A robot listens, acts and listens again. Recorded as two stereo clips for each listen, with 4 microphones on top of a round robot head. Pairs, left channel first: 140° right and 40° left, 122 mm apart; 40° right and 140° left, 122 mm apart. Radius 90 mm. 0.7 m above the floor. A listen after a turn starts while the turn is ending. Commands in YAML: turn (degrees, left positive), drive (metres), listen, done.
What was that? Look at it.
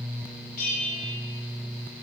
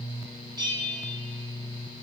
turn: -155
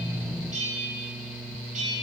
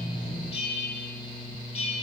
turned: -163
done: "Found it: a bell, straight ahead, 2 to 4 m away."